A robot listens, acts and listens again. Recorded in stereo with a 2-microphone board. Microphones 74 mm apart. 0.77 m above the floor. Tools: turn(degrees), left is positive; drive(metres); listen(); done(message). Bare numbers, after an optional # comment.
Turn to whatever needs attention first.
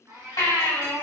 # The baby crying: about 65° left or 115° left.
turn(65)
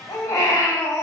# So it is at 50° left.
turn(50)
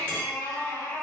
# The baby crying is now 20° left.
turn(20)
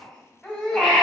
done("Found it: a baby crying, straight ahead.")